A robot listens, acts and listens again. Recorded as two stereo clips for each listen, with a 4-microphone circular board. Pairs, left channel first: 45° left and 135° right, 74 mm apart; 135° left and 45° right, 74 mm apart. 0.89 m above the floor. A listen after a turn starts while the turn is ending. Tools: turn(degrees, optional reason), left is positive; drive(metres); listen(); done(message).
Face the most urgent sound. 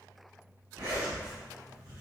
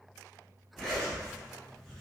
listen()
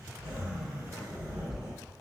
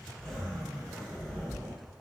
listen()
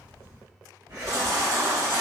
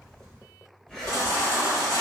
turn(degrees=180, reason="The baby crying: straight behind.")
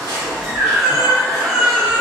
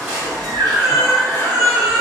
turn(degrees=-50, reason="The baby crying is now 50° right.")
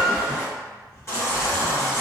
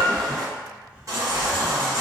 done("Facing the baby crying, 1 to 2 m away.")